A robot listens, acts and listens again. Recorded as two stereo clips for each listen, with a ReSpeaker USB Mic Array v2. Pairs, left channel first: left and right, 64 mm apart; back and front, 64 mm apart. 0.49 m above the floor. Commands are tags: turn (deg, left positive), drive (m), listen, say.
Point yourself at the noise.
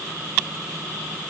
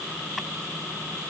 <listen/>
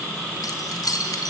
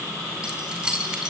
<turn deg="75"/>
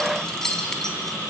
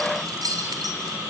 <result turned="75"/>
<turn deg="10"/>
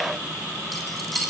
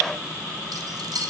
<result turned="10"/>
<say>Found it: keys jangling, straight ahead.</say>